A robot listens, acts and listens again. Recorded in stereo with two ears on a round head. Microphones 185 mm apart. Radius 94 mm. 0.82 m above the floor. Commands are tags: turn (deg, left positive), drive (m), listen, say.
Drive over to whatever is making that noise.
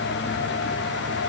<listen/>
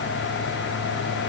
<listen/>
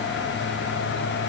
<say>I can't make out anything.</say>